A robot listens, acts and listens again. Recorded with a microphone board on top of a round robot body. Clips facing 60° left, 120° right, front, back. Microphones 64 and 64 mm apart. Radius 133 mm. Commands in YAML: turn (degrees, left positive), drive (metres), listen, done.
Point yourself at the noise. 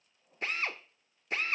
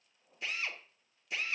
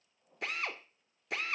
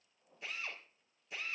turn: 15
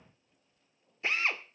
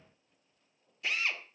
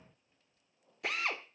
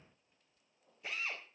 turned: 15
done: "Found it: a drill, straight ahead."